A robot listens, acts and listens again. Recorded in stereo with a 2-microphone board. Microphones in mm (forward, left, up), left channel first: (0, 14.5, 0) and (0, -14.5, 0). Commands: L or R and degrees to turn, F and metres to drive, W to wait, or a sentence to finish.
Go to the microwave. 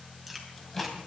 L30
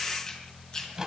R20
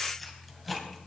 F1.0
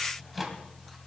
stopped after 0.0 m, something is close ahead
Blocked. The microwave is further on, straight ahead.